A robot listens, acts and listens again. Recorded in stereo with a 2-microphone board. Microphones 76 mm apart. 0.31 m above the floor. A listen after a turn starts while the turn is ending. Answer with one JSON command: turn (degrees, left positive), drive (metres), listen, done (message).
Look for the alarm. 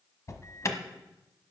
{"turn": 45}
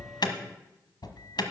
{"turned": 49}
{"turn": 80}
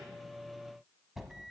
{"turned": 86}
{"done": "Found it: an alarm, straight ahead."}